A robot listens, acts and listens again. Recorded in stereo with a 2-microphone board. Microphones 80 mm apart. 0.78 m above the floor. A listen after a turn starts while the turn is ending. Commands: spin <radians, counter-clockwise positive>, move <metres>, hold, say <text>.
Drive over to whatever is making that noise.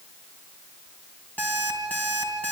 spin 0.35
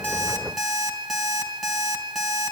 move 1.0
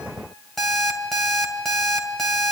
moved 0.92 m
move 1.0
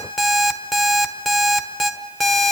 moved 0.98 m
move 1.0
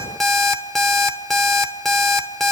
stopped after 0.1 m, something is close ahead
say Arrived at the alarm clock, straight ahead.